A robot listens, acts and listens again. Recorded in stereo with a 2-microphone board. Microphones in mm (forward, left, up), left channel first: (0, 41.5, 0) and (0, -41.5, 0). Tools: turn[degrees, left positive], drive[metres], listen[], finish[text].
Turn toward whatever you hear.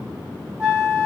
Action: turn[-30]
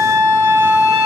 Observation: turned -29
Thought: So it is at 140° right.
Action: turn[-140]
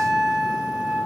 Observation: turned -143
Action: finish[Found it: a flute, straight ahead, 1 to 2 m away.]